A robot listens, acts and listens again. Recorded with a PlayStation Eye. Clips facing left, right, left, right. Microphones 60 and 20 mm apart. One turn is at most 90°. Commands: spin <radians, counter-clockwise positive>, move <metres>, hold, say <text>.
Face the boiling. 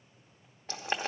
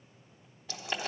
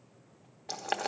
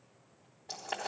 spin 0.70
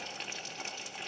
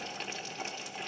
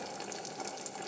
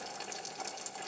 say Facing the boiling.